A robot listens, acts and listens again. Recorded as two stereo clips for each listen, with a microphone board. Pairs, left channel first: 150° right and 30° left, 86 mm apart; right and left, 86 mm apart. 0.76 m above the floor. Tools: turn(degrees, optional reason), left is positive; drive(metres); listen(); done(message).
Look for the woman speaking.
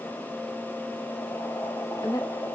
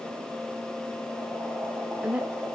turn(degrees=170, reason="The woman speaking: 170° left.")
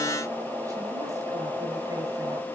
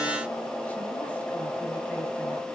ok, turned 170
listen()
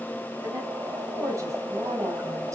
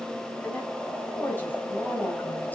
turn(degrees=-20, reason="The woman speaking is now 20° right.")
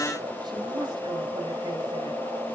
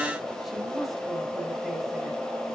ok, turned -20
listen()
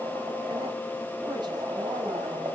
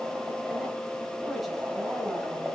listen()
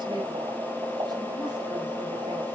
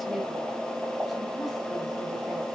done("Facing where the woman speaking came from. I can't hear it now.")